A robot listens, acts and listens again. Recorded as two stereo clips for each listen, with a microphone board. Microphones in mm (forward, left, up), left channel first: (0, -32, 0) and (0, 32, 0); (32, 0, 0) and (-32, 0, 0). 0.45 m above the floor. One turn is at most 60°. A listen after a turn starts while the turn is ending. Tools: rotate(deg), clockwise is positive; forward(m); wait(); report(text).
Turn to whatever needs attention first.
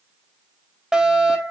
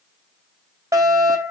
rotate(-60)
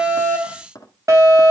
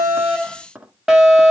rotate(-60)
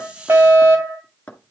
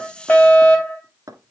rotate(-60)
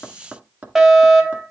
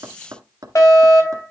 rotate(-10)
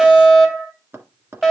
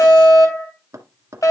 report("Facing the fire alarm, 2 to 4 m away.")